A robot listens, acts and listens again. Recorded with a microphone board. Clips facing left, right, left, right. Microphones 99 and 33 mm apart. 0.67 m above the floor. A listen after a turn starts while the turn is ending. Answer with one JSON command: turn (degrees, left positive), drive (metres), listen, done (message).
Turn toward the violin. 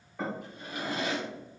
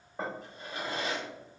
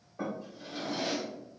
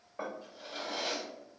{"listen": true}
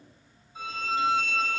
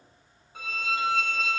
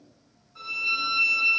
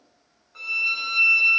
{"turn": -70}
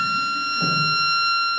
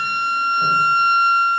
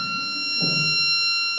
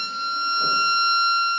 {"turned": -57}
{"turn": -15}
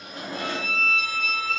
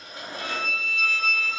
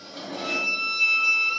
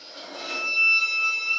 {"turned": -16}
{"done": "Found it: a violin, straight ahead, 1 to 2 m away."}